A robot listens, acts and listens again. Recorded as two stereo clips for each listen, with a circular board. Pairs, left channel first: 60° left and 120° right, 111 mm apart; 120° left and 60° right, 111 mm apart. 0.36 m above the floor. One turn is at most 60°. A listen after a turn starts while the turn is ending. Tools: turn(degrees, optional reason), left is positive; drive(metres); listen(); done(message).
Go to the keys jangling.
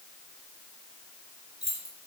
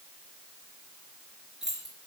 turn(degrees=-60, reason="The keys jangling: 145° right.")
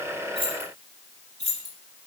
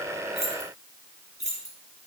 turn(degrees=-60, reason="The keys jangling is now 70° right.")
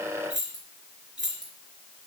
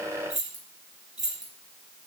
turn(degrees=-40, reason="The keys jangling is now 40° right.")
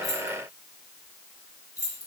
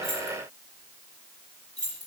drive(metres=1.0)
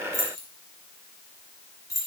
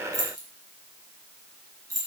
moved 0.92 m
drive(metres=1.0)
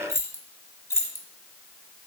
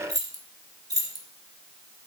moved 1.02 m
drive(metres=1.0)
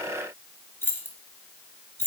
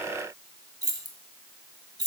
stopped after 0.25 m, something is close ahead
turn(degrees=-10, reason="The keys jangling is now 10° right.")
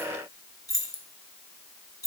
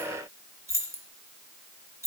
done("Arrived at the keys jangling, straight ahead.")